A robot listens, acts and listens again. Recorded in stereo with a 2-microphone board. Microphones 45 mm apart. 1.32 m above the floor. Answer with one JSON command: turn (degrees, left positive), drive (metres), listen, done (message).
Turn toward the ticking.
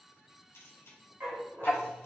{"turn": 40}
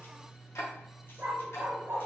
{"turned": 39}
{"turn": 100}
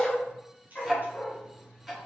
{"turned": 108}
{"turn": -10}
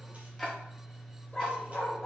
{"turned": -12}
{"done": "Facing the ticking, 1 to 2 m away."}